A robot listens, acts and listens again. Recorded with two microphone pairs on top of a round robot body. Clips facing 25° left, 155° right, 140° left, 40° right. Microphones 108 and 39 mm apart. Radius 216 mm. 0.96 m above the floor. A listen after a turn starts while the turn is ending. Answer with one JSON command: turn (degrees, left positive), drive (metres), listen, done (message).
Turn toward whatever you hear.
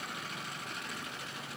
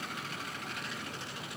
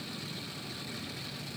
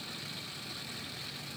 {"listen": true}
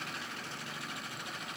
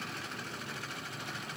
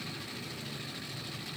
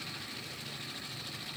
{"listen": true}
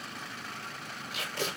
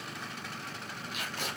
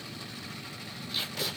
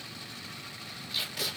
{"turn": 40}
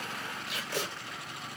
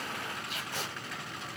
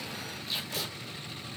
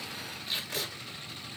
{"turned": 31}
{"turn": 10}
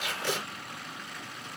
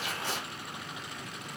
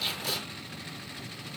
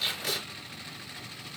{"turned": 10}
{"done": "Facing the tape being pulled."}